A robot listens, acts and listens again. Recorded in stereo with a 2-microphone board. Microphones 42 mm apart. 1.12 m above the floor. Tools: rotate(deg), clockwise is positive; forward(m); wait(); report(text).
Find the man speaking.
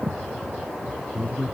rotate(-55)
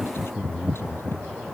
rotate(-70)
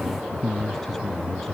rotate(-10)
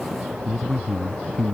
report("Found it: a man speaking, straight ahead.")